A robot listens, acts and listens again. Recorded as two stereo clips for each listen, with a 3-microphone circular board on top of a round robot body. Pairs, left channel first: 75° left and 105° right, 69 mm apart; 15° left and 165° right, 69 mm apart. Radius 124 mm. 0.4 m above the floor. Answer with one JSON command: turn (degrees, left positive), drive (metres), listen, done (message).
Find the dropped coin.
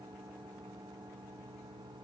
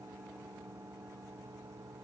{"listen": true}
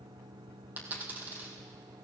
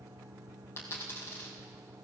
{"turn": -40}
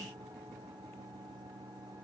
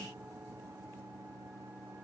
{"done": "I heard a dropped coin from this way, but can't make it out now."}